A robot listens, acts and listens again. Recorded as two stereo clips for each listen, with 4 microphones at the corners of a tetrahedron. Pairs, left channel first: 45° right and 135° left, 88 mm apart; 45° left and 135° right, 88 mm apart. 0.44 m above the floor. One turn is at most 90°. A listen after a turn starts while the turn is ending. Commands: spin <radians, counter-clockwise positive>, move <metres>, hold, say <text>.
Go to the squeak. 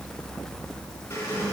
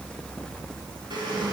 spin -1.57
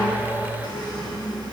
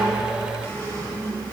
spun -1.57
spin -0.26
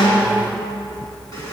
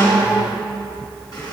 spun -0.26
move 1.0
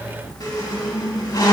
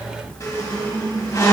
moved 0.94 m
move 1.0
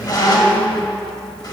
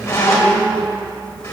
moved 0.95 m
spin -0.17
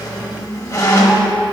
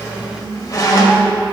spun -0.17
move 1.0
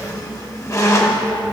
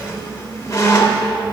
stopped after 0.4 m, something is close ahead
say I am next to the squeak.